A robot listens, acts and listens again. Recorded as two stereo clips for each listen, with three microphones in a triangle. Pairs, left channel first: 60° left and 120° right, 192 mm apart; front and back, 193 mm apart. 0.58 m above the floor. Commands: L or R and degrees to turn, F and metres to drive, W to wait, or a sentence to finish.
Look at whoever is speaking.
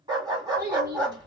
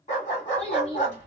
R85
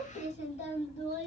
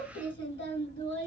Facing the child speaking, 1 to 2 m away.